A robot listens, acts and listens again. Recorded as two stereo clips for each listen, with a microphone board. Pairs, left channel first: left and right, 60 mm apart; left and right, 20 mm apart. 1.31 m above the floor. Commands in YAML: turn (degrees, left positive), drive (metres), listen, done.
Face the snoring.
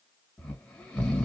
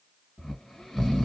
turn: 30
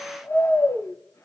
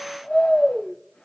turn: 135
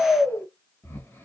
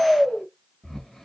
turn: 35
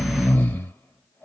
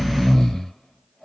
turn: 30
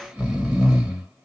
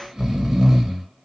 turn: -15
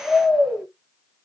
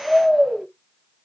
done: "Found it: snoring, straight ahead, 1 to 2 m away."